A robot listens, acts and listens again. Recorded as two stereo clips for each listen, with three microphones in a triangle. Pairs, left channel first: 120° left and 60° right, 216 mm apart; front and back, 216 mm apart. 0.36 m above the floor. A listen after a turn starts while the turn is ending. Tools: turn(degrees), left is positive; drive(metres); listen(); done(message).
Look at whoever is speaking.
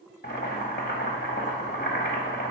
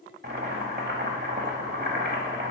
listen()
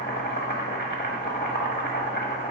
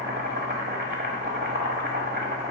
listen()
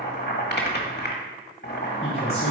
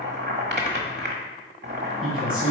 turn(degrees=95)
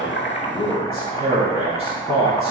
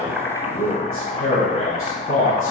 done("Found it: a man speaking, straight ahead, 2 to 4 m away.")